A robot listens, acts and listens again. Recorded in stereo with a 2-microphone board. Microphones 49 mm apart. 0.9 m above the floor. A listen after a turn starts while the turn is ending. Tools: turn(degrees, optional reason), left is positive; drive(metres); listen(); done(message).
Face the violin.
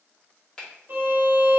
turn(degrees=-45, reason="The violin: about 45° right or 135° right.")
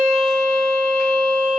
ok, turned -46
done("Facing the violin, 1 to 2 m away.")